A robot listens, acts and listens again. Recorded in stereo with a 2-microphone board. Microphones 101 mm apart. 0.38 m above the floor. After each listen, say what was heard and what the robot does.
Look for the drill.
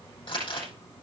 Keep listening.
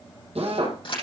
Turn 90° right.
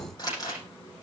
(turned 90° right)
Keep listening.
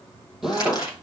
Found it: a drill, straight ahead, over 4 m away.